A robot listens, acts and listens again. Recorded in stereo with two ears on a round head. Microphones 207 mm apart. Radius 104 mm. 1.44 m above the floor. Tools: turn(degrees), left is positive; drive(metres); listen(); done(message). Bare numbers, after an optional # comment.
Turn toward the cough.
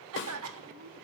# The cough: about 70° right or 110° right.
turn(-70)
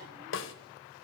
listen()
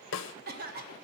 # So it is at 40° right.
turn(-40)
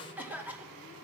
done("Facing the cough.")